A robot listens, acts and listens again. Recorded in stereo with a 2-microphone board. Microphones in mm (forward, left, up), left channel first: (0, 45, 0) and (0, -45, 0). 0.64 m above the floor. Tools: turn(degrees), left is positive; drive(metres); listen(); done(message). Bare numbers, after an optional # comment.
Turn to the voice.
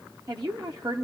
# The woman speaking: about 45° right or 135° right.
turn(-45)
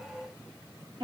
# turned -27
# So it is at 95° right.
turn(-95)
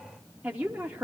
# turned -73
# The woman speaking is now 20° right.
turn(-20)
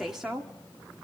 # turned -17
done("Found it: a woman speaking, straight ahead, under 1 m away.")